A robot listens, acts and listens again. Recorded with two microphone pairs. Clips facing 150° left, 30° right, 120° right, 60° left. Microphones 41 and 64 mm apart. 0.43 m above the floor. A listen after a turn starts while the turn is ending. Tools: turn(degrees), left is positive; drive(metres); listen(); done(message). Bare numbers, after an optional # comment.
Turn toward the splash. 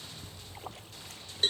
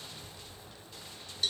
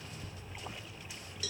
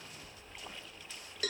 # The splash: 160° left.
turn(160)
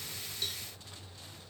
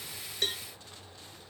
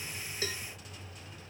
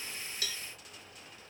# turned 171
# Nothing new. It was at 10° right.
turn(-10)
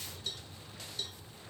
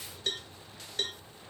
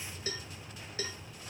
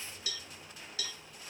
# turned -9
done("I heard a splash from this way, but can't make it out now.")